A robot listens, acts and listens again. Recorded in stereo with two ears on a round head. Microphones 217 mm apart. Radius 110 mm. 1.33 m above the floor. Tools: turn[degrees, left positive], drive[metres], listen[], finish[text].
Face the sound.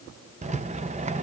Thought: The rattle: about 30° right or 150° right.
Action: turn[-30]
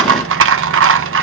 Thought: So it is at 120° right.
Action: turn[-120]
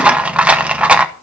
Action: finish[Found it: a rattle, straight ahead, under 1 m away.]